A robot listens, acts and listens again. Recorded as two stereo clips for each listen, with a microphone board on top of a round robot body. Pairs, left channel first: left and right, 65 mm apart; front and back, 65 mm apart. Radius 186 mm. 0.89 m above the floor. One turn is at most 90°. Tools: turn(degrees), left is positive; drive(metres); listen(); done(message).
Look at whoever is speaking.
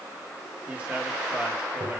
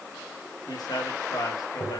turn(degrees=-20)
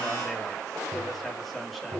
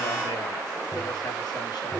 listen()
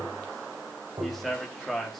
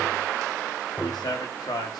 done("Found it: a man speaking, straight ahead.")